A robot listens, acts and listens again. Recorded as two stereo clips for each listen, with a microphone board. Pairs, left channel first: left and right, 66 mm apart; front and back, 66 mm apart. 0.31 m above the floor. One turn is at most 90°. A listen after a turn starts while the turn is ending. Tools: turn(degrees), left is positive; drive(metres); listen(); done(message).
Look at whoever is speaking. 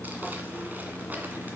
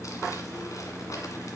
listen()
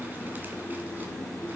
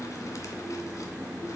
listen()
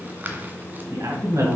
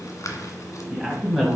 turn(degrees=-80)
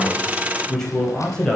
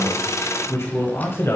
turn(degrees=15)
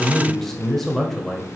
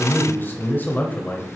turn(degrees=10)
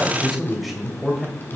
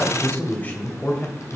done("Facing the man speaking, 1 to 2 m away.")